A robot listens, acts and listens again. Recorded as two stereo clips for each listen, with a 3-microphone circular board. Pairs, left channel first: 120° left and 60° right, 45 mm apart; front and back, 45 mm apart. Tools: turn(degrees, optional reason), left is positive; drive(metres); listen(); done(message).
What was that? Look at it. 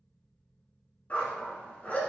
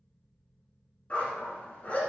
turn(degrees=60, reason="The dog barking: 60° left.")
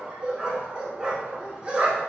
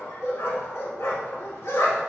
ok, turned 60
turn(degrees=10, reason="The dog barking is now 10° left.")
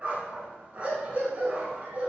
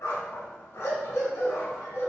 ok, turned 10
done("Facing the dog barking.")